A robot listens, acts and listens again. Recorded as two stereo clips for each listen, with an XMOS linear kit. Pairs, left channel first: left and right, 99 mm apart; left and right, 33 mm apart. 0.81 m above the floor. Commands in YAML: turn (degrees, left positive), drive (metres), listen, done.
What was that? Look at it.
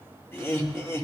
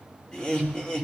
turn: 30
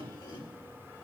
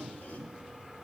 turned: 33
turn: 120
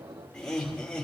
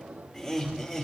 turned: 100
turn: 10
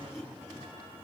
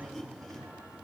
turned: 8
done: "Facing the laughter, over 4 m away."